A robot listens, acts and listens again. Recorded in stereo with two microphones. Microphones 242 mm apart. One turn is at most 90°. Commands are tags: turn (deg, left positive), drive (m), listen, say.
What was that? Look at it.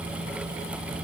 <listen/>
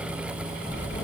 <turn deg="45"/>
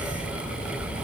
<turn deg="90"/>
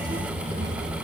<turn deg="-20"/>
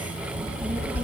<say>Found it: a child speaking, straight ahead.</say>